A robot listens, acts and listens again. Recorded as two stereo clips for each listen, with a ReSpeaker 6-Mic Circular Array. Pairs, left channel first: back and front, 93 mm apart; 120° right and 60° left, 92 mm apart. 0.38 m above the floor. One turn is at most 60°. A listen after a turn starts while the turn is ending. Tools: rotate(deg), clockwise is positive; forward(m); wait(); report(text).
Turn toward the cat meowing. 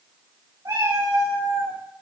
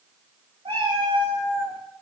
rotate(-45)
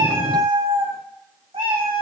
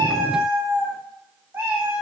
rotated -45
rotate(10)
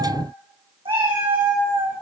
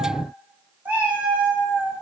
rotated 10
rotate(20)
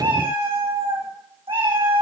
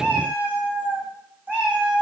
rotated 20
rotate(15)
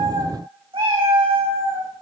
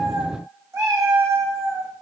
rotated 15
report("Facing the cat meowing.")